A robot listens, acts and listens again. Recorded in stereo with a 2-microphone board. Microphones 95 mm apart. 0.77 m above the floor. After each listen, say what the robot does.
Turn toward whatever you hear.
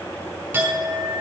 Turn 20° right.
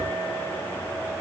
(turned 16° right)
Keep listening.
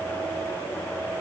Keep listening.
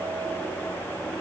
I heard a clink, but can't make it out now. It was about 5° right or 145° right.